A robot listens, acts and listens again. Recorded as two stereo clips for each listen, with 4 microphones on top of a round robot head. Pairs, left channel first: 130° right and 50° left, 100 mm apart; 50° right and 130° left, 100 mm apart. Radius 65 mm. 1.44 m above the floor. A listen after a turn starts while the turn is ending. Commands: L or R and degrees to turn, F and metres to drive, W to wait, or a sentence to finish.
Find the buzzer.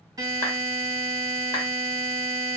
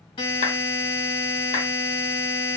Facing the buzzer, 1 to 2 m away.